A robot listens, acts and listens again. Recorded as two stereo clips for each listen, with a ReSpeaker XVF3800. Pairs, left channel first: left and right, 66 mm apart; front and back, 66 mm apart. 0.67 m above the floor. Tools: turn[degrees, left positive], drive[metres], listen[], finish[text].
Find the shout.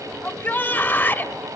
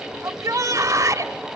Thought: The shout: 150° left.
Action: turn[150]
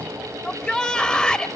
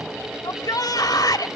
Thought: The shout is now 15° left.
Action: turn[15]
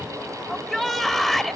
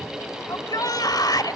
Action: finish[Facing the shout, 1 to 2 m away.]